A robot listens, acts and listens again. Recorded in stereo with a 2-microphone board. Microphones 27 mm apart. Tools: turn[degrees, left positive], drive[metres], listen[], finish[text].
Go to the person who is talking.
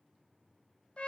Action: listen[]
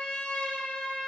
Action: listen[]
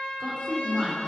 Action: turn[30]
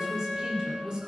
Thought: So it is at 25° right.
Action: turn[-25]
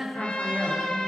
Action: drive[1.0]
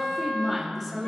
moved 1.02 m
Action: drive[1.0]
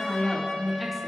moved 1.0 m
Action: drive[1.0]
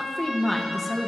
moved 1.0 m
Thought: The woman speaking is now 10° left.
Action: turn[10]
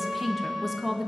Action: drive[1.0]
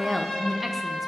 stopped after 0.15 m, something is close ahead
Action: finish[Arrived at the woman speaking, straight ahead.]